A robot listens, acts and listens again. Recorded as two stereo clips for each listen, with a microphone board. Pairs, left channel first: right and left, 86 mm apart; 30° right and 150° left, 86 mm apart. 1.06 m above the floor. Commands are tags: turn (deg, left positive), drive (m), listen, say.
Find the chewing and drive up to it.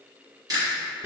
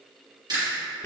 <turn deg="125"/>
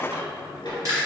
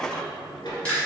<turn deg="45"/>
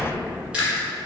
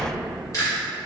<turn deg="15"/>
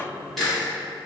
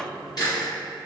<drive m="1.0"/>
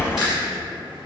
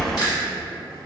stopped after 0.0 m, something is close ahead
<listen/>
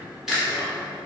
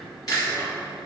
<say>Blocked. The chewing is further on, straight ahead.</say>